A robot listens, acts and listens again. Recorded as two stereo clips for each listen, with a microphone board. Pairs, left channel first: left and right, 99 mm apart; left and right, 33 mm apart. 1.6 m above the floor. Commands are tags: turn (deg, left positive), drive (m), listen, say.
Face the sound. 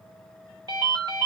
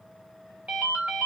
<turn deg="-45"/>
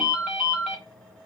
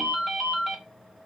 <say>Found it: a ringtone, straight ahead.</say>